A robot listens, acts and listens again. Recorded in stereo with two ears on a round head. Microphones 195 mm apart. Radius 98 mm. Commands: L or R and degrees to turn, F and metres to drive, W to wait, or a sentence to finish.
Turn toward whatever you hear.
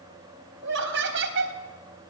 R60
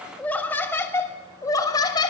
L20
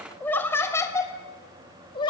L25
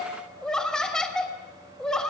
Found it: laughter, straight ahead, 2 to 4 m away.